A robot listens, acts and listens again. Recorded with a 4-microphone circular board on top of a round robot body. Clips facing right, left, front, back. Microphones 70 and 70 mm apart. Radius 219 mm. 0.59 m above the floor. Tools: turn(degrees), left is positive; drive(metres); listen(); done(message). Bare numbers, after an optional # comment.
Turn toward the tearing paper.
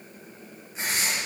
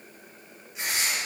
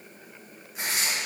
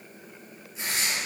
# The tearing paper: 35° right.
turn(-35)
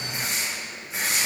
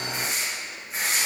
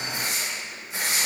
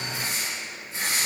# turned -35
done("Facing the tearing paper.")